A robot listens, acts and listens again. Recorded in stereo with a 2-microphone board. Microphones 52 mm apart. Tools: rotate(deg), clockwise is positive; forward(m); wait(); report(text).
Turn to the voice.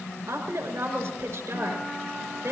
rotate(90)
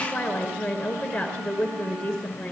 rotate(-10)
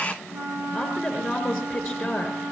report("Found it: a woman speaking, straight ahead, over 4 m away.")